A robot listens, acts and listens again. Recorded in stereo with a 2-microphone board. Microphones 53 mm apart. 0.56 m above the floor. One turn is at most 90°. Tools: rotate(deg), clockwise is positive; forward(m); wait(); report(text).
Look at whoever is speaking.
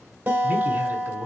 rotate(35)
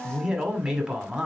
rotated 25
rotate(15)
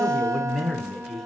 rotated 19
report("Found it: a man speaking, straight ahead.")